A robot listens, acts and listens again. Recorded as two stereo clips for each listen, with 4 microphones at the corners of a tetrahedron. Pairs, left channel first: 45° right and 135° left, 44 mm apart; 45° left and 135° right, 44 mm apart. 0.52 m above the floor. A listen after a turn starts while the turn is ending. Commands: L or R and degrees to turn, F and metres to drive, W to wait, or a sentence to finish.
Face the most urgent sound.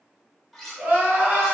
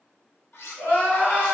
L75
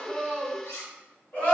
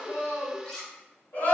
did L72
Facing the crying.